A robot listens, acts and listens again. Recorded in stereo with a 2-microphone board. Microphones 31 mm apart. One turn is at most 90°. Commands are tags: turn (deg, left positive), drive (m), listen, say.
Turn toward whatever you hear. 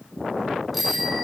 <turn deg="30"/>
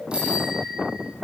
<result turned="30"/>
<turn deg="-35"/>
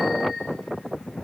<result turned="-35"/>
<listen/>
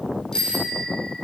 <turn deg="25"/>
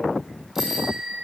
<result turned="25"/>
<turn deg="-10"/>
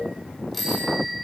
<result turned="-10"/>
<say>Found it: a bicycle bell, straight ahead, 2 to 4 m away.</say>